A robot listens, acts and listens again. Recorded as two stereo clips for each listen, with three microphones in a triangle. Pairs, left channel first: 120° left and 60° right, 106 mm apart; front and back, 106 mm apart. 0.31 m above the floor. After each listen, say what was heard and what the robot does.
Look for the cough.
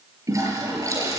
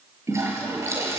Keep listening.
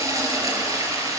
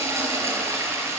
Keep listening.
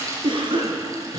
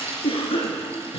The cough: 25° right. Turn 25° right.
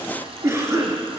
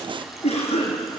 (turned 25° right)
Found it: a cough, straight ahead, over 4 m away.